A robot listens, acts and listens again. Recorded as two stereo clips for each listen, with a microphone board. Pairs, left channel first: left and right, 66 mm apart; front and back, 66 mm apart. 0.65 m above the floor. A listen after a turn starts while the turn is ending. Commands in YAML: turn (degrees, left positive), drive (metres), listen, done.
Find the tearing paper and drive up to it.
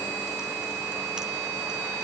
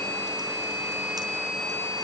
listen: true
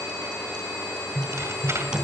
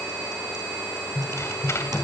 turn: -45
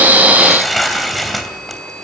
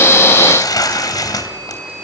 drive: 1.0
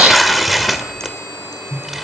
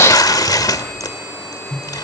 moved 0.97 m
drive: 1.0
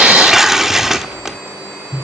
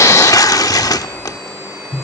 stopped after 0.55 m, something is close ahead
done: "I am next to the tearing paper."